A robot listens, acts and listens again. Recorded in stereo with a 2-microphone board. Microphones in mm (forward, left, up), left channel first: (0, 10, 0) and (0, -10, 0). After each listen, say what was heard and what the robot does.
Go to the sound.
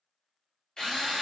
The drill: about 45° left or 135° left. Turn 45° left.
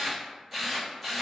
Drive 1.0 m forward.
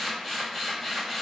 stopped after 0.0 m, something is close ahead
The drill is now 10° left. Turn 10° left.
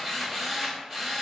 Blocked. The drill is further on, straight ahead.